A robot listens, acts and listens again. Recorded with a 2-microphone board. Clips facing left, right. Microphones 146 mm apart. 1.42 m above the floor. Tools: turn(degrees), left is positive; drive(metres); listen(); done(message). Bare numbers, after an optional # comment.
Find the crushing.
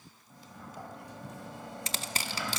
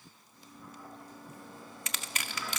# The crushing: about 30° left or 150° left.
turn(30)
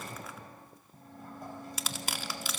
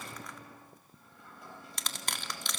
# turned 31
done("Found it: crushing, straight ahead, 1 to 2 m away.")